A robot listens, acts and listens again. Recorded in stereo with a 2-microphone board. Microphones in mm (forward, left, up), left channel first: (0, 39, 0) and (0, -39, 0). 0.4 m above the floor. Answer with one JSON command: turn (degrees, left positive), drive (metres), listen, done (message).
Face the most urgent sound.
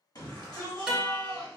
{"turn": 55}
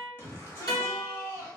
{"turn": 35}
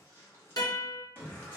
{"turn": 30}
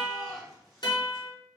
{"done": "Facing the shout."}